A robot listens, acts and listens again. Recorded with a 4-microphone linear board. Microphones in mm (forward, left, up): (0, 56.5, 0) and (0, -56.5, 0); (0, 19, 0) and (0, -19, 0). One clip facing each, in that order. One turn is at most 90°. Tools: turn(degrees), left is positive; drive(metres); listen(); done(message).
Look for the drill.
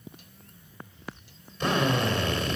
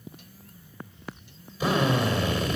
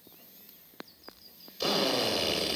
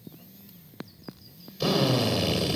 turn(degrees=-30)
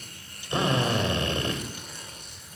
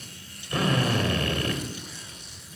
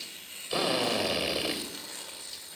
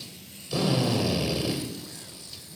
turn(degrees=25)
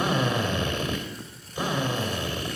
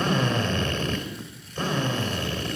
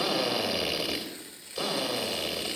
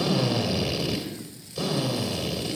turn(degrees=10)
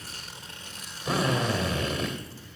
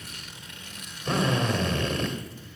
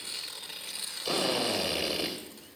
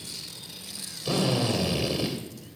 done("Found it: a drill, straight ahead.")